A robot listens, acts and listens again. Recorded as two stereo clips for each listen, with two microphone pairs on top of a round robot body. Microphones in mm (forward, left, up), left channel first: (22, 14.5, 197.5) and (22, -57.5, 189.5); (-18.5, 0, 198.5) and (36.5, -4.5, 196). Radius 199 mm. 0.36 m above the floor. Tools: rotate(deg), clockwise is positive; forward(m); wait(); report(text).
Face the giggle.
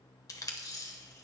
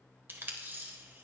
wait()
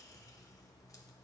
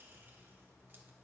wait()
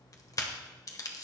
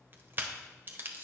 report("I can't make out a giggle to turn to.")